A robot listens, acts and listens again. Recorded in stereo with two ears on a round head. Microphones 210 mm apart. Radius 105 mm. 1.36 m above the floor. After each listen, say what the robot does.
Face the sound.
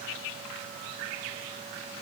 Keep listening.
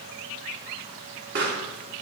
Turn 50° right.
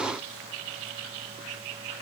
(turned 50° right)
Keep listening.
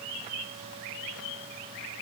I heard a pop, but can't make it out now. It was about straight ahead or 80° right.